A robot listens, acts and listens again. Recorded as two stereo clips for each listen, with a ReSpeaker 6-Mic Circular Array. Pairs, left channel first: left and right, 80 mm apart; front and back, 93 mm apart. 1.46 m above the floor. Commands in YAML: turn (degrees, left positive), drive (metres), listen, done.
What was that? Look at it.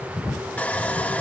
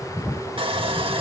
turn: 160
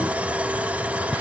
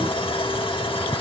listen: true
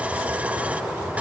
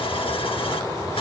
listen: true
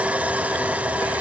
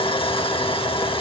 turn: -20
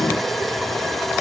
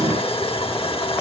listen: true
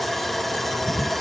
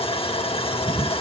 done: "Found it: sawing, straight ahead."